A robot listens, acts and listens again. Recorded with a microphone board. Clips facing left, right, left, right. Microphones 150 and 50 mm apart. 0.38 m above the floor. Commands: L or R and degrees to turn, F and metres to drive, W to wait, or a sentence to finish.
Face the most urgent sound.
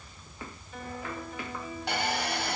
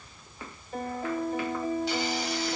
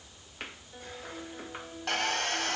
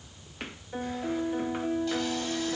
W
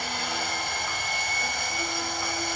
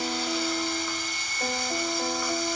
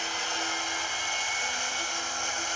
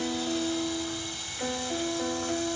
W
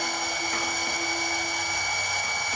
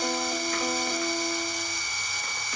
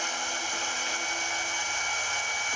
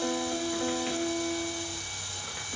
I can't make out anything urgent to turn to.